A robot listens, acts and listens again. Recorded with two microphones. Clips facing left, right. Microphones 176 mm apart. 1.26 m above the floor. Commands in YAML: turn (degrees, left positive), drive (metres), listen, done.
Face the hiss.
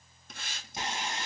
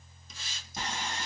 turn: 65
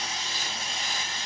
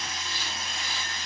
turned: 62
listen: true
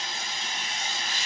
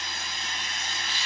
listen: true
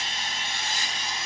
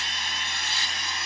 done: "I heard a hiss, but can't make it out now. It was about straight ahead or 55° left."